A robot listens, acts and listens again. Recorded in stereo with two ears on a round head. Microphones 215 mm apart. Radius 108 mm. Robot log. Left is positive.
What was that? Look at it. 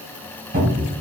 note: The cupboard door: about 35° right or 145° right.
cmd yaw -35
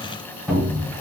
end: Found it: a cupboard door, straight ahead, 1 to 2 m away.